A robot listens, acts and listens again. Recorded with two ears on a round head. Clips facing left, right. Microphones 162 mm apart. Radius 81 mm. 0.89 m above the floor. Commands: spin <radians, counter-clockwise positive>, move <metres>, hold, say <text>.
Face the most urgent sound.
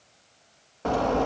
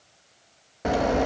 spin -0.35
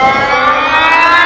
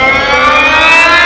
spin -2.44
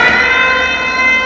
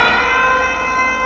spin 0.35
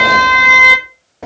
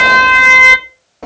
say Found it: an alarm, straight ahead.